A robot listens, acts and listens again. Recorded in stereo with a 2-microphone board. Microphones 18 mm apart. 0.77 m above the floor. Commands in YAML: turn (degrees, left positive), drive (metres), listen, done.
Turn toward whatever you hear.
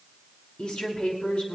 turn: 90
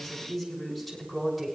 turn: 10
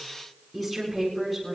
done: "Facing the woman speaking, over 4 m away."